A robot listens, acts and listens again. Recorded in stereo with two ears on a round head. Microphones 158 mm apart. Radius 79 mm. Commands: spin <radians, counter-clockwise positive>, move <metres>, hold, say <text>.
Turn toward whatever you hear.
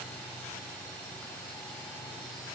hold
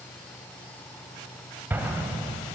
spin -0.52
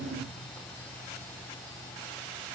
hold
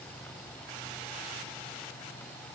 say I heard an explosion, but can't make it out now. It was about 20° left or 140° right.